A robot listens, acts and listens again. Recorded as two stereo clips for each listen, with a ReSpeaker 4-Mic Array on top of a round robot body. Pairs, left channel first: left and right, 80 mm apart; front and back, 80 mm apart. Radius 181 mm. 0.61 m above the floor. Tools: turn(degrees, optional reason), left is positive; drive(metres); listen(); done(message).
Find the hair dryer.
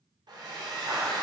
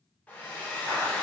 turn(degrees=-70, reason="The hair dryer: 70° right.")
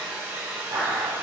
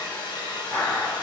turn(degrees=-20, reason="The hair dryer is now 20° right.")
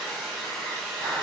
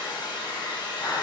done("Found it: a hair dryer, straight ahead.")